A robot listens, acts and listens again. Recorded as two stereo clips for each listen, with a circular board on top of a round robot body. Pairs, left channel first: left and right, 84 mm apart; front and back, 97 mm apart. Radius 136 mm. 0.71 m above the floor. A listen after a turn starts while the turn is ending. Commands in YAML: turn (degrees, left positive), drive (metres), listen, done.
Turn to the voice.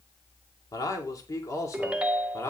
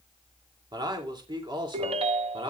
turn: 145
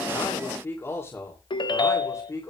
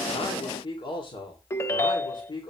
turn: 40
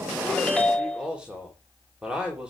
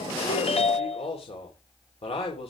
turn: -10
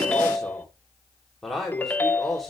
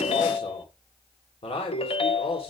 done: "Found it: a man speaking, straight ahead."